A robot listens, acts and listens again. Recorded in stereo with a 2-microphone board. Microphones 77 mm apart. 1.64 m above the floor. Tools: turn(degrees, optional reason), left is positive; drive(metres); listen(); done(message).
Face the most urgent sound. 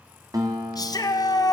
turn(degrees=55, reason="The shout: about 55° left or 125° left.")
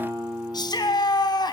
turn(degrees=70, reason="So it is at 70° left.")
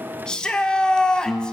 turn(degrees=10, reason="The shout is now 10° left.")
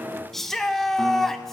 done("Facing the shout.")